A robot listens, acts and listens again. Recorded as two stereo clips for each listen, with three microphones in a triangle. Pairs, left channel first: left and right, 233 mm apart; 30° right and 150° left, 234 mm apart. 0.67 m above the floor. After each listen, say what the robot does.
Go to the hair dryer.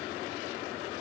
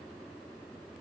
Keep listening.
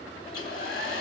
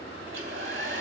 Turn 120° left.
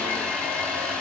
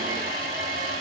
Drive 1.0 m forward.
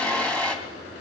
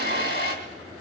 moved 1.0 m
Drive 1.0 m forward.
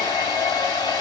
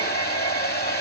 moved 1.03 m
Turn 15° left.
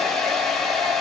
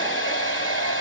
Drive 1.0 m forward.
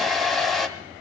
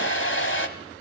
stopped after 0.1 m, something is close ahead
I am next to the hair dryer.